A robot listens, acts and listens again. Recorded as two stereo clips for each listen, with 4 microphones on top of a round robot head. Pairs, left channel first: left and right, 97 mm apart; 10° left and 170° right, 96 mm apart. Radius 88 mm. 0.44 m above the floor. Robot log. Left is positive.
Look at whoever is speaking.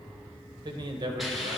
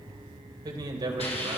note: The man speaking: 130° right.
cmd yaw -130
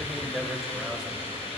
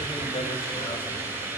end: Facing the man speaking, 1 to 2 m away.